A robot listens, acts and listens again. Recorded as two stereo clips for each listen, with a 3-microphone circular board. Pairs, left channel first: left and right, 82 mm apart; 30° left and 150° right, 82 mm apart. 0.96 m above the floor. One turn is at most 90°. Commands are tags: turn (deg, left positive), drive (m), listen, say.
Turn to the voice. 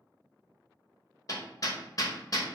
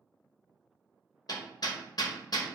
<listen/>
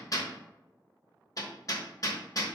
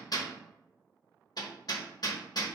<listen/>
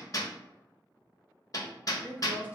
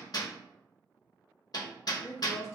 <turn deg="-20"/>
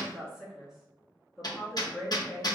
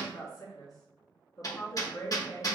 <say>Found it: a woman speaking, straight ahead.</say>